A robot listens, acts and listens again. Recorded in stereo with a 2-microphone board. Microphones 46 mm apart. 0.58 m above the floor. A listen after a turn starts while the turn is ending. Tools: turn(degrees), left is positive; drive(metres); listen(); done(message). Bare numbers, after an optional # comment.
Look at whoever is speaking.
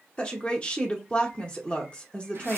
# The woman speaking: about 25° left or 155° left.
turn(25)
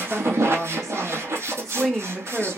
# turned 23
# So it is at 10° left.
turn(10)
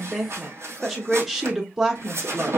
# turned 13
done("Found it: a woman speaking, straight ahead.")